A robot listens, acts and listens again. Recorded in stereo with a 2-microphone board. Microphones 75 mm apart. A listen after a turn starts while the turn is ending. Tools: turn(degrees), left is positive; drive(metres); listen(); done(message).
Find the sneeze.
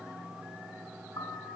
listen()
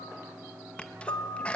turn(degrees=15)
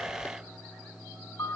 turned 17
listen()
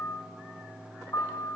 done("I heard a sneeze, but can't make it out now. It was about straight ahead or 145° left.")